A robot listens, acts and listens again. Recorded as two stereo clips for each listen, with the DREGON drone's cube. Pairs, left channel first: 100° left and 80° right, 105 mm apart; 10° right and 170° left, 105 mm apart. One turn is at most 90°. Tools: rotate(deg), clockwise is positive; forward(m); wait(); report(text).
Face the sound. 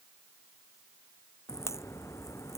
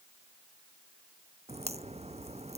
rotate(-90)
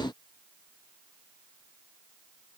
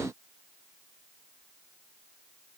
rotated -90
rotate(-75)
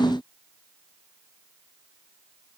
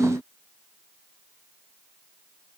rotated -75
report("I heard a crack from this way, but can't make it out now.")